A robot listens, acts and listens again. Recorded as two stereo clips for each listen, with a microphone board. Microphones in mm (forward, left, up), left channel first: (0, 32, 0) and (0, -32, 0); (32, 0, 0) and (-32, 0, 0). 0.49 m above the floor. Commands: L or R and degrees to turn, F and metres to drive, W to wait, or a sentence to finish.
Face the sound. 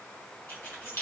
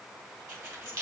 L145
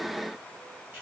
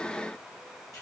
W
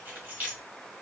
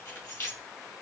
R30
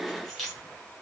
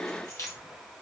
Facing the keys jangling, 1 to 2 m away.